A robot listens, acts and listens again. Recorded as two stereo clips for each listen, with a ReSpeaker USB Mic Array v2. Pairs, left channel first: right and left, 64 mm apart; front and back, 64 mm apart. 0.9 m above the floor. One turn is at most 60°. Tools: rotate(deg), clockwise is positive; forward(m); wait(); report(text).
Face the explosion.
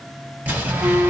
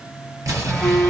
rotate(-60)
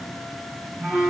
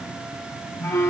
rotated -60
rotate(-60)
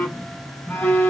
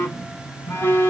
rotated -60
rotate(-35)
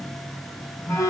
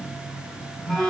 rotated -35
report("Facing where the explosion came from. I can't hear it now.")